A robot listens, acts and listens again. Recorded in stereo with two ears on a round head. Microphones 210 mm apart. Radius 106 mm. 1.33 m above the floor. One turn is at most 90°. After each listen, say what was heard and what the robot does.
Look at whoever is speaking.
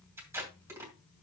Keep listening.
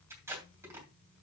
Keep listening.
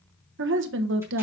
The woman speaking: about 50° right or 130° right. Turn 50° right.
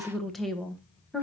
Found it: a woman speaking, straight ahead, 1 to 2 m away.